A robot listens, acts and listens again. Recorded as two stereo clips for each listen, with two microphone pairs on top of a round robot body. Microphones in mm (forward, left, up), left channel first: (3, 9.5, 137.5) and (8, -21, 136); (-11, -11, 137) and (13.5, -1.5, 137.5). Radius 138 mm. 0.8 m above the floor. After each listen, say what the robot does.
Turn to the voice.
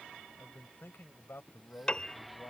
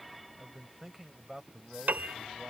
Turn 90° left.
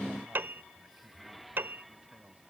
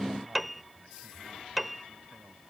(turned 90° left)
Keep listening.
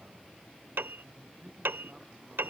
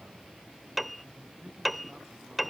Keep listening.
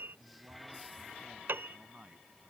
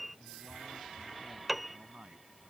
Turn 30° right.
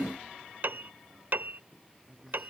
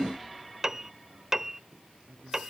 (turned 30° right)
Turn 15° right.
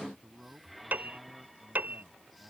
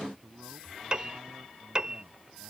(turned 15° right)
Facing the man speaking.